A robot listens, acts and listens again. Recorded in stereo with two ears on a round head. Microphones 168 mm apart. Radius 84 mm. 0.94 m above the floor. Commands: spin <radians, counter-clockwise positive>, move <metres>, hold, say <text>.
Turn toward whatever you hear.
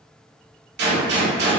spin -1.05
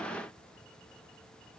hold
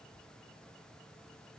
say I heard a gunshot, but can't make it out now. It was about straight ahead or 60° right.